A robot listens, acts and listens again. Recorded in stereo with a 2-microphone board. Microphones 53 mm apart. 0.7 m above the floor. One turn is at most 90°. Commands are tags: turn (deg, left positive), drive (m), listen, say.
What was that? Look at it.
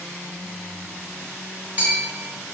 <turn deg="-30"/>
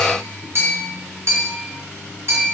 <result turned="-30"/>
<turn deg="-90"/>
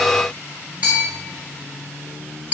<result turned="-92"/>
<turn deg="-30"/>
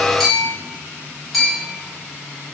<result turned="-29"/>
<say>Facing the bell.</say>